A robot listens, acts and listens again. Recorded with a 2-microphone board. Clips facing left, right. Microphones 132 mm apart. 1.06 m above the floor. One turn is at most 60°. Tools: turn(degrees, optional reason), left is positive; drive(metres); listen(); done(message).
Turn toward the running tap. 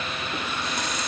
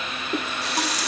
turn(degrees=-60)
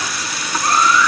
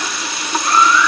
turn(degrees=-25, reason="So it is at 25° right.")
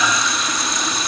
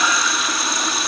done("Facing the running tap, 1 to 2 m away.")